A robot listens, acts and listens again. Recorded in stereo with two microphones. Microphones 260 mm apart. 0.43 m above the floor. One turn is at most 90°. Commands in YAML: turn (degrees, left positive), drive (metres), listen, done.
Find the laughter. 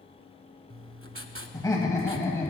turn: 30
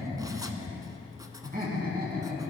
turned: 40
turn: -35
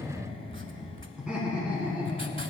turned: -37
done: "Facing the laughter, over 4 m away."